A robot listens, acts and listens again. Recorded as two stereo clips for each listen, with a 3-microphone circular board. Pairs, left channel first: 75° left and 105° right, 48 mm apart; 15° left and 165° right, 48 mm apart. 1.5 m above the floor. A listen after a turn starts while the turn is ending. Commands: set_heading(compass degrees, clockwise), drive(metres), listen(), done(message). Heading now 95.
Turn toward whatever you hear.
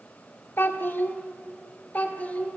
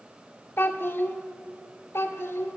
set_heading(75)
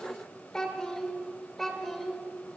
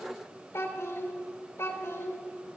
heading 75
set_heading(85)
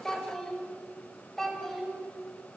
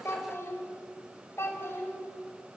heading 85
set_heading(95)
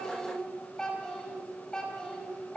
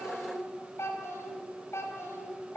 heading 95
done("Facing the child speaking.")